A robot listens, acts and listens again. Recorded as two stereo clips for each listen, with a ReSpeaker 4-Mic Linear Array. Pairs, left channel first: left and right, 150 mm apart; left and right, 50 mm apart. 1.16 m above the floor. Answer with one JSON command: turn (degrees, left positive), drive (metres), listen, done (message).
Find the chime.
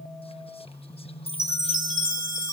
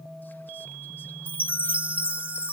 {"turn": -30}
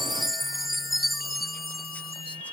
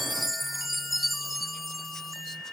{"done": "Facing the chime."}